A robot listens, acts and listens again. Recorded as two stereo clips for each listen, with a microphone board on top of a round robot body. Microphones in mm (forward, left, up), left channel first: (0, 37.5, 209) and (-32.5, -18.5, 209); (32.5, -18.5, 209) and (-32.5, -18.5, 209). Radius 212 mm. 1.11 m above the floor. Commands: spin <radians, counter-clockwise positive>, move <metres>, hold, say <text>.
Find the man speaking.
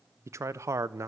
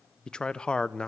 spin -1.31
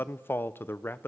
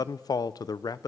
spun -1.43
say Facing the man speaking.